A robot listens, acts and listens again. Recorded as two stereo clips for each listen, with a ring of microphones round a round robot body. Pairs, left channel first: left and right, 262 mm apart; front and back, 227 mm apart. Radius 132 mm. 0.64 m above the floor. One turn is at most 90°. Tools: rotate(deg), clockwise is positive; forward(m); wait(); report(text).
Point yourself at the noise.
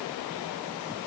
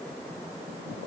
wait()
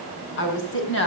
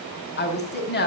rotate(-45)
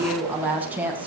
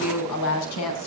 report("Facing the woman speaking, over 4 m away.")